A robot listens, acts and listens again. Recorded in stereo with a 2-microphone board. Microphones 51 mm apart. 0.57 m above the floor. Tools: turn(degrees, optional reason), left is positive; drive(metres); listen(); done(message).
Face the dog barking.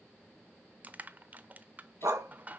turn(degrees=-75, reason="The dog barking: about 75° right or 105° right.")
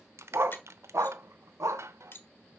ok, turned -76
turn(degrees=-80, reason="So it is at 80° right.")
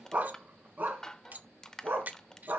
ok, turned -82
turn(degrees=-40, reason="The dog barking is now 40° right.")
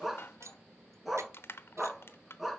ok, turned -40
done("Facing the dog barking, 2 to 4 m away.")